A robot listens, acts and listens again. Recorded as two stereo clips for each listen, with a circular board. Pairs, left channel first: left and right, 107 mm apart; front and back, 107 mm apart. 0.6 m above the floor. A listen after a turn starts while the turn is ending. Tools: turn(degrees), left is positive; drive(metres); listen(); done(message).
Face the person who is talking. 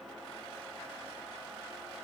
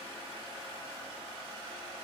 listen()
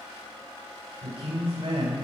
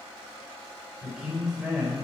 turn(degrees=-95)
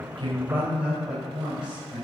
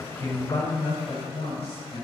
turn(degrees=-10)
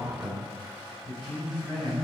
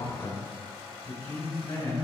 done("Facing the man speaking, over 4 m away.")